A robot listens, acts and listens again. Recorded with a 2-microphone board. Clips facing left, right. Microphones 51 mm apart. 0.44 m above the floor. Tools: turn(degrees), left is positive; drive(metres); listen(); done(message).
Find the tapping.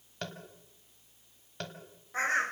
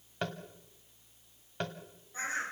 turn(degrees=-15)
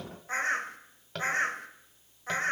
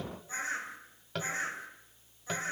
done("Found it: tapping, straight ahead, 2 to 4 m away.")